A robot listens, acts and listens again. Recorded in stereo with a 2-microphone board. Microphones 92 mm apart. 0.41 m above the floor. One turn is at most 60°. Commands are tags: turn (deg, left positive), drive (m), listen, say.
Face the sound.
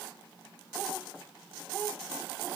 <listen/>
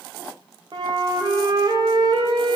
<turn deg="-50"/>
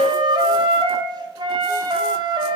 <turn deg="-60"/>
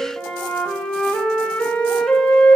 <turn deg="10"/>
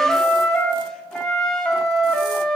<say>Facing the flute.</say>